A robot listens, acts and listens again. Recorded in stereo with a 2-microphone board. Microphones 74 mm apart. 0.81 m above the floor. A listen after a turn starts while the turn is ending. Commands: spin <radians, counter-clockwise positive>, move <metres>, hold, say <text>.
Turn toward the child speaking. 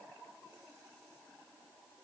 hold
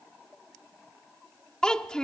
spin 0.52
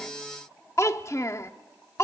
spin 2.44
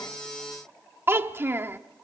spin -0.52
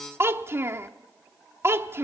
spin -0.61
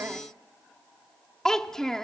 say Found it: a child speaking, straight ahead.